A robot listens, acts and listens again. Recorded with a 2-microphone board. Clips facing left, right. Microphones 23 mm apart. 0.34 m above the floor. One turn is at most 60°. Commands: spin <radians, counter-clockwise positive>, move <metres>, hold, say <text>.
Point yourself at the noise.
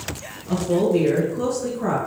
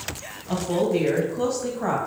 spin -0.70
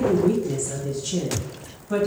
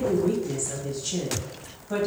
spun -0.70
spin -0.17
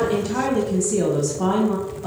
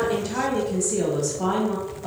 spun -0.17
say Found it: a woman speaking, straight ahead.